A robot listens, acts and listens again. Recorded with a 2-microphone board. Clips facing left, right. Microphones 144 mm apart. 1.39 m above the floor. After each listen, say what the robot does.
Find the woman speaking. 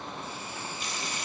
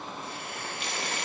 Keep listening.
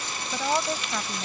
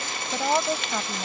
Turn 15° right.
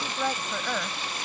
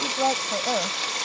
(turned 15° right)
Turn 150° right.
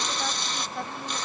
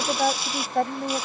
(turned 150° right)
Turn 55° right.
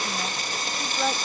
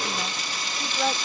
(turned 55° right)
Found it: a woman speaking, straight ahead.